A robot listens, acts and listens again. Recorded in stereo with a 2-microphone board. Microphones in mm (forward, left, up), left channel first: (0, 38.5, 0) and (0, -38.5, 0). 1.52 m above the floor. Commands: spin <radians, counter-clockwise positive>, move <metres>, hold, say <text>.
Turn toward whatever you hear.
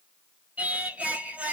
spin -0.35
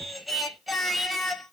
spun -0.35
say Facing the singing, under 1 m away.